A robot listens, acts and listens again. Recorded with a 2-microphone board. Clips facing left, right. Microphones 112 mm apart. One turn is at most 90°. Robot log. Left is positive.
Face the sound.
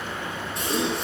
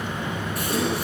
note: The gasp: about 25° left or 155° left.
cmd yaw +25
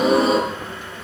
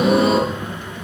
end: Found it: a gasp, straight ahead, over 4 m away.